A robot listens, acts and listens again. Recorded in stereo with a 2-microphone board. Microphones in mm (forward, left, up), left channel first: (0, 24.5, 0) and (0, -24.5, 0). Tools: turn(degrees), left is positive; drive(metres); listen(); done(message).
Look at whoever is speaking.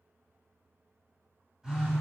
listen()
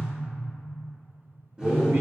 turn(degrees=-75)
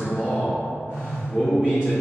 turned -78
turn(degrees=-20)
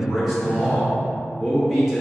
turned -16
done("Facing the man speaking.")